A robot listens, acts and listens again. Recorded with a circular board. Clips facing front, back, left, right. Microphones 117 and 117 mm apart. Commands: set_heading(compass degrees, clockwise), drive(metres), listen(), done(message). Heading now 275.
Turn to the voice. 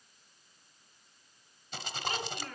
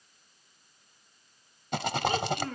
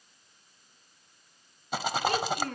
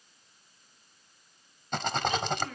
set_heading(155)
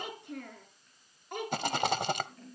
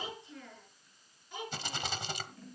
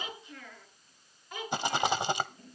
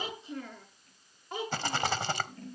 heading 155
set_heading(185)
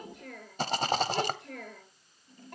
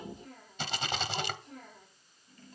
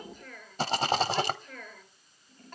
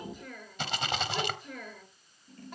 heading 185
set_heading(195)
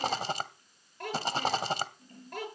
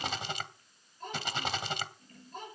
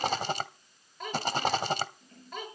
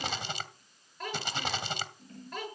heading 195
done("Found it: a child speaking, straight ahead.")